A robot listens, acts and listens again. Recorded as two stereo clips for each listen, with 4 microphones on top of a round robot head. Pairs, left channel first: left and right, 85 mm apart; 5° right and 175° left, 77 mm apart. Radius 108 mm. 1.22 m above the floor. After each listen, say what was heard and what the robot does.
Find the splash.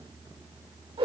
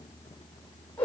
Keep listening.
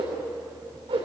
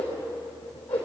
Keep listening.
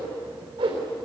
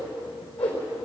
I can't make out a splash, only a whoosh.